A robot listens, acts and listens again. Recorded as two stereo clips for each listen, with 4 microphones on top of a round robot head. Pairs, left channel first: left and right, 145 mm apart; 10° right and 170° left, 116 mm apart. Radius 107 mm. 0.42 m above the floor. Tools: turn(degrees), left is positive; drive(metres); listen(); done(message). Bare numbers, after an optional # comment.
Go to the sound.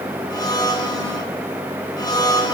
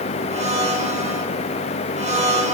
# The blender: 155° left.
turn(155)
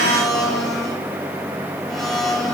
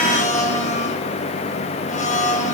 drive(1.0)
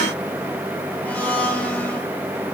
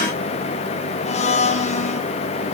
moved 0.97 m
# The blender is now 10° left.
turn(10)
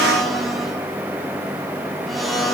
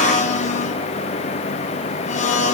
drive(1.0)
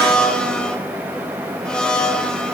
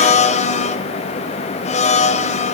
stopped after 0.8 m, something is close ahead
done("Arrived at the blender, straight ahead.")